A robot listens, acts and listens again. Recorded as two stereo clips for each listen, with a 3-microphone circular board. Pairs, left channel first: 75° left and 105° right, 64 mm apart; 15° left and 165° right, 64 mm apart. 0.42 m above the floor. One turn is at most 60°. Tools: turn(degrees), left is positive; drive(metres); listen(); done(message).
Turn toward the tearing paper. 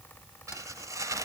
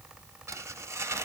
turn(degrees=-60)
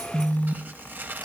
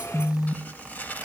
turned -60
turn(degrees=-45)
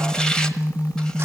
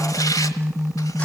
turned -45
listen()
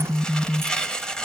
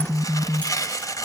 done("Found it: tearing paper, straight ahead, 1 to 2 m away.")